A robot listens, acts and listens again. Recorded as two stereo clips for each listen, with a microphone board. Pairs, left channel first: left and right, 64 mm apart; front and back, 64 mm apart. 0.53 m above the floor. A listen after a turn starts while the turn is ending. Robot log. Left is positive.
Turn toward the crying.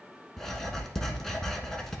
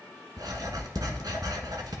cmd idle
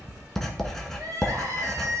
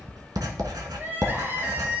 note: The crying: 125° right.
cmd yaw -125
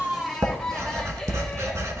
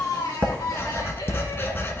cmd idle
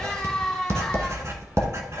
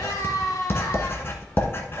note: The crying is now 10° left.
cmd yaw +10
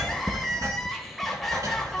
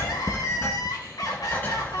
end: Found it: crying, straight ahead, 1 to 2 m away.